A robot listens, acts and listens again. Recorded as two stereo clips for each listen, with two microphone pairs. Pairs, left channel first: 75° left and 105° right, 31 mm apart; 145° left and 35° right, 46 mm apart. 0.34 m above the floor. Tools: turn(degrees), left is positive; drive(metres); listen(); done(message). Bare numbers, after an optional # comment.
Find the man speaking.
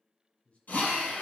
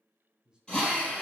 # The man speaking: 35° left.
turn(35)
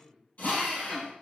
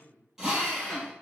done("Facing the man speaking, 2 to 4 m away.")